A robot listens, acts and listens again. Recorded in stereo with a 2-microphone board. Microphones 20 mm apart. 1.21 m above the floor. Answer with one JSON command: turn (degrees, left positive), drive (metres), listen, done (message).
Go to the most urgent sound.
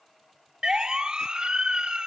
{"turn": -40}
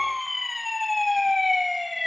{"drive": 1.0}
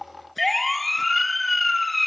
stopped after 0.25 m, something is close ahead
{"done": "Something is in my way. I am facing the siren but have not reached it."}